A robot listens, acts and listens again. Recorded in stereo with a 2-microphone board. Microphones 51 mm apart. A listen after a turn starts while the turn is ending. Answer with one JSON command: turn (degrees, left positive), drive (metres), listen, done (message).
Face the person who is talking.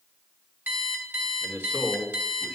{"turn": 20}
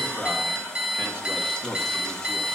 {"turn": 20}
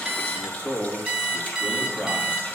{"turn": 20}
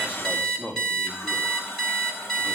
{"turn": 140}
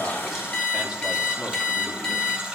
{"listen": true}
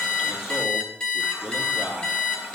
{"done": "Found it: a man speaking, straight ahead, 2 to 4 m away."}